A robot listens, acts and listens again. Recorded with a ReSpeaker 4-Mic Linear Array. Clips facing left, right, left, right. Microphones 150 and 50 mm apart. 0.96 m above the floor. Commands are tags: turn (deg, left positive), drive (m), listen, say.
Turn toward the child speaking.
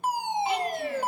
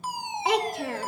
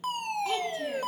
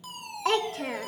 <turn deg="-90"/>
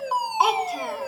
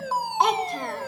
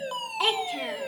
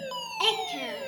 <say>Facing the child speaking.</say>